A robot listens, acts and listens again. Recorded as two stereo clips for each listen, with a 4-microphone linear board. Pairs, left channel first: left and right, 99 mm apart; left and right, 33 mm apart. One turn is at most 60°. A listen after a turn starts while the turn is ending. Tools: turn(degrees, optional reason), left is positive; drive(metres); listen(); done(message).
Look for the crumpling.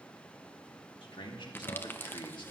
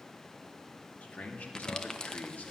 turn(degrees=20, reason="The crumpling: about 20° left or 160° left.")
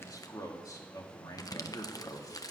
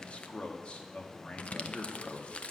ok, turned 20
turn(degrees=60, reason="So it is at 140° left.")
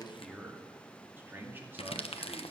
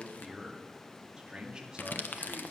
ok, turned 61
turn(degrees=60, reason="The crumpling is now 80° left.")
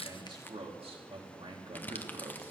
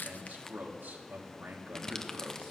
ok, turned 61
turn(degrees=20, reason="The crumpling is now 20° left.")
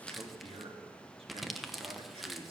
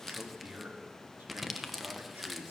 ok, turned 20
done("Facing the crumpling.")